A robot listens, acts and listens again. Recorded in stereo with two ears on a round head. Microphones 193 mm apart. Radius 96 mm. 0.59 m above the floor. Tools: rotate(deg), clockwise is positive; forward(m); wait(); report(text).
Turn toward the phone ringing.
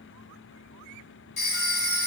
rotate(-35)
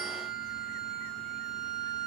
wait()
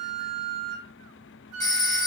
report("Found it: a phone ringing, straight ahead, 1 to 2 m away.")